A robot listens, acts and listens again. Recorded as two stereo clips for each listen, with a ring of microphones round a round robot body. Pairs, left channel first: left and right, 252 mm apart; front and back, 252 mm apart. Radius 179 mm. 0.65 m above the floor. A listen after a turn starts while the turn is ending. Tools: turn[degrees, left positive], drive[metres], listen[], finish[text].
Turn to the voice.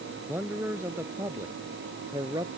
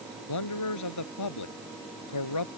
Thought: The man speaking: 10° right.
Action: turn[-10]
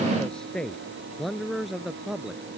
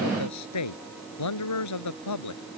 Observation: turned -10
Action: finish[Facing the man speaking.]